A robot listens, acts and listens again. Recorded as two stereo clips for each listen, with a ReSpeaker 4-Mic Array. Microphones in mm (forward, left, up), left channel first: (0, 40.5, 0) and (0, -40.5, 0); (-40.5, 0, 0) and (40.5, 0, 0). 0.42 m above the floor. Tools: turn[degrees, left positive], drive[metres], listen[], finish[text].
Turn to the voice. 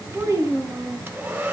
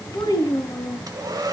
Thought: The child speaking: 145° right.
Action: turn[-145]
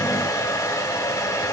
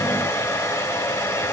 Action: listen[]
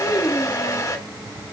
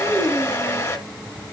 Thought: The child speaking is now 10° left.
Action: turn[10]
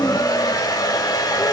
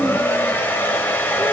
Action: listen[]
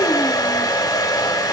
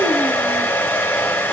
Action: listen[]
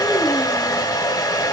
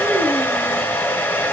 Action: finish[I heard a child speaking from this way, but can't make it out now.]